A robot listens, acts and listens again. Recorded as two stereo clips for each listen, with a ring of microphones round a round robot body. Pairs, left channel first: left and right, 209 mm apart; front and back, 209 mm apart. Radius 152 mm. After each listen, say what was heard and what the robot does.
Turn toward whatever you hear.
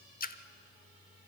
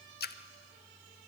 The splash: 40° left. Turn 40° left.
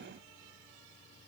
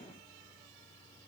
I heard a splash from this way, but can't make it out now.